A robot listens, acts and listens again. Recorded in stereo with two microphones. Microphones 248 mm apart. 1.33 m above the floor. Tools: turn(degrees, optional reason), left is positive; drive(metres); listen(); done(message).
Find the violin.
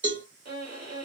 turn(degrees=-75, reason="The violin: about 75° right or 105° right.")
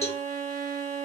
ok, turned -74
turn(degrees=-15, reason="So it is at 15° right.")
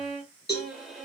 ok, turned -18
done("Found it: a violin, straight ahead.")